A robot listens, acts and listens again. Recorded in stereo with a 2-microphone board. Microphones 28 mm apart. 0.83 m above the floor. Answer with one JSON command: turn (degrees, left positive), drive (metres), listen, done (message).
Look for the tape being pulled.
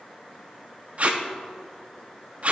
{"turn": -50}
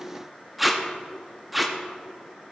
{"done": "Found it: tape being pulled, straight ahead, under 1 m away."}